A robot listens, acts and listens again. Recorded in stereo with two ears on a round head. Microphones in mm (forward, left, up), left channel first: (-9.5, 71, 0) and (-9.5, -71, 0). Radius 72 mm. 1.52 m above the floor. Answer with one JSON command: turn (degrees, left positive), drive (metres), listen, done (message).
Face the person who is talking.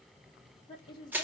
{"turn": 30}
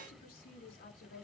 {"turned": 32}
{"turn": 115}
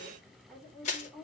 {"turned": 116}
{"done": "Found it: a woman speaking, straight ahead."}